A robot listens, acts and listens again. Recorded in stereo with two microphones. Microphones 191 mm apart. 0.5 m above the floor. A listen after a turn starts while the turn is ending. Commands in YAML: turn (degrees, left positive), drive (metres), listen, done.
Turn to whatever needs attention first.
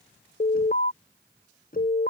turn: 55
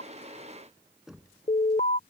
turn: 55
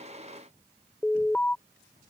turn: 10
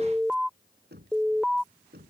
done: "Facing the alarm."